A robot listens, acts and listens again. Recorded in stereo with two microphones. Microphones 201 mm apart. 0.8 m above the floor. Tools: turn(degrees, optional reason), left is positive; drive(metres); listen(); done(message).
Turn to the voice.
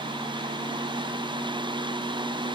listen()
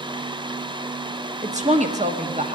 turn(degrees=-35, reason="The woman speaking: about 35° right or 145° right.")
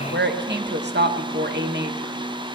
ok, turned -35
turn(degrees=-105, reason="So it is at 105° right.")
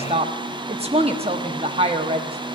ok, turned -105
turn(degrees=-35, reason="The woman speaking is now 35° right.")
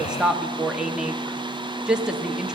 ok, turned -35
done("Facing the woman speaking.")